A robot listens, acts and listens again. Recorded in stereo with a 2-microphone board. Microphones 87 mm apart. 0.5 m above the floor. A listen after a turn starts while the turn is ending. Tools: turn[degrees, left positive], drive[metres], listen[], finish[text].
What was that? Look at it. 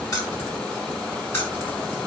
Thought: The keys jangling: about 30° left or 150° left.
Action: turn[30]
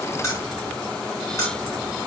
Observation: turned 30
Thought: The keys jangling: about 40° left or 140° left.
Action: turn[40]
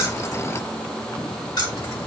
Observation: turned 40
Thought: So it is at 135° left.
Action: turn[135]
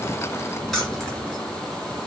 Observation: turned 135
Action: finish[Facing the keys jangling.]